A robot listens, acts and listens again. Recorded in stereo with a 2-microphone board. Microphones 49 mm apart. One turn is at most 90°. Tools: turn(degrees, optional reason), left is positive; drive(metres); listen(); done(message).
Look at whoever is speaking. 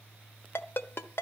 listen()
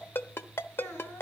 turn(degrees=90)
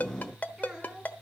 done("Found it: a child speaking, straight ahead, 2 to 4 m away.")